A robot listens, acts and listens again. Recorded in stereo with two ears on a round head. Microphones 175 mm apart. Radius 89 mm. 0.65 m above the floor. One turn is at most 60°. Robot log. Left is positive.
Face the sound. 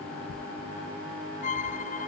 note: The violin: about 40° left or 140° left.
cmd yaw +40
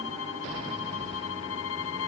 note: So it is at 100° left.
cmd yaw +60
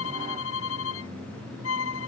note: The violin is now 70° left.
cmd yaw +60
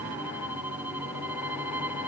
note: The violin is now 10° right.
cmd yaw -10
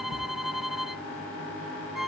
end: Found it: a violin, straight ahead.